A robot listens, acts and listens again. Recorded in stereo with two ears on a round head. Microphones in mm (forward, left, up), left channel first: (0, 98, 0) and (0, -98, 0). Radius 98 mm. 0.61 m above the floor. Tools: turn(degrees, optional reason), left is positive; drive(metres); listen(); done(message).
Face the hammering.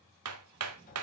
turn(degrees=-90)
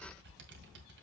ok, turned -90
listen()
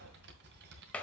done("Facing the hammering.")